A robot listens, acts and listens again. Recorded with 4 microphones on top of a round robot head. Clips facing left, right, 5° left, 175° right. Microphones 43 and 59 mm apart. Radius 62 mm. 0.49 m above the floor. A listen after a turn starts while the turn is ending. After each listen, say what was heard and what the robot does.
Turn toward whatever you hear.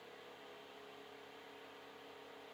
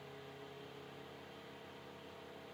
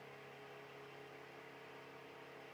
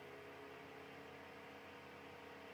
Keep listening.
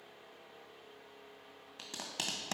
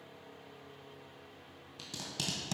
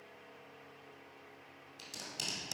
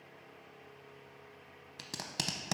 The tape being pulled: 150° left. Turn 150° left.
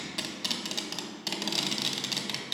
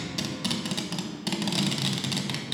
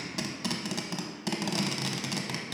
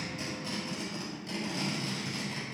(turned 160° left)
The tape being pulled is now 10° right. Turn 10° right.
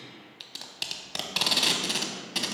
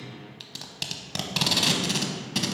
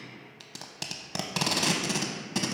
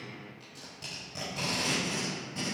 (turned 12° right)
Facing the tape being pulled.